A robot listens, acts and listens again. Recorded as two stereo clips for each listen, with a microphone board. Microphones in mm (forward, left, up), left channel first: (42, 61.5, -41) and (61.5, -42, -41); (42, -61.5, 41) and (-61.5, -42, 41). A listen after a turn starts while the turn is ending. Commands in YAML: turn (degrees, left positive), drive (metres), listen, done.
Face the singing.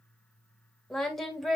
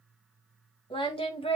turn: 10
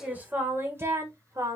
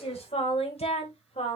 turn: -20
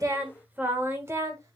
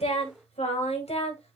turn: -20
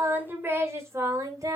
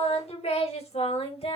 turn: -25
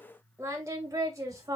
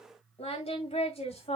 turn: -20
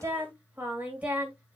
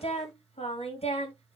done: "Facing the singing."